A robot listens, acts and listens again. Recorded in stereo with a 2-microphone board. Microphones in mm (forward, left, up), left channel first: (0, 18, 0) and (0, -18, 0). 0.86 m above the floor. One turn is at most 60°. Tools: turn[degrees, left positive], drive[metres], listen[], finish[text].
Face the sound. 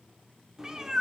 Thought: The cat meowing: about 15° right or 165° right.
Action: turn[-15]
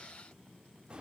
Thought: So it is at 150° right.
Action: turn[-60]
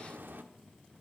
Thought: The cat meowing is now 95° right.
Action: turn[-60]
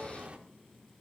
Thought: The cat meowing is now 35° right.
Action: turn[-35]
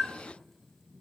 Action: finish[Found it: a cat meowing, straight ahead.]